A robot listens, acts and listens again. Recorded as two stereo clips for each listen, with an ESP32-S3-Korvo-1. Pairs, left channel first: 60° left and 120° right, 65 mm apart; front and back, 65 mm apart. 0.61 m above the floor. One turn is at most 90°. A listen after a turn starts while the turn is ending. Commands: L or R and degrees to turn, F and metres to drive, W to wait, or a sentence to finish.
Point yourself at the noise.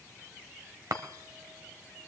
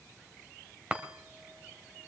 R90
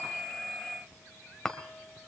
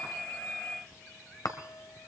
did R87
R20
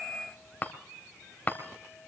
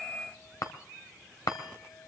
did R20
Facing the chime.